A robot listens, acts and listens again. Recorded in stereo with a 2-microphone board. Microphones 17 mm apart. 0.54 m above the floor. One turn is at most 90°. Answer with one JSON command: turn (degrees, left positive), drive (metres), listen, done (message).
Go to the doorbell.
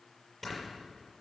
{"listen": true}
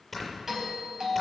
{"turn": -30}
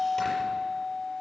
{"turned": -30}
{"drive": 1.0}
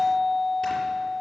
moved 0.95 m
{"turn": -10}
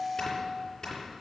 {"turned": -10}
{"drive": 1.0}
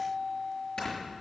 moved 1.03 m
{"turn": -10}
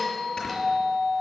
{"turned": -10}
{"drive": 1.0}
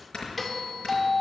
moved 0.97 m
{"drive": 1.0}
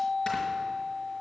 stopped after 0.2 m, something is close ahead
{"turn": -10}
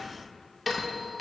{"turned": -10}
{"done": "Arrived at the doorbell, straight ahead."}